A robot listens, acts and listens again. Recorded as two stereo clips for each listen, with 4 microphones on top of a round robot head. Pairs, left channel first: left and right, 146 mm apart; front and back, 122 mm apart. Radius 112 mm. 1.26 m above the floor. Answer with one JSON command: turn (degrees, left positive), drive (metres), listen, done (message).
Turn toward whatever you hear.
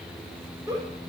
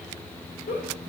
{"turn": -20}
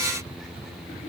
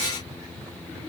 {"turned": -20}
{"listen": true}
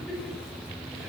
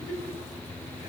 {"done": "Facing the giggle."}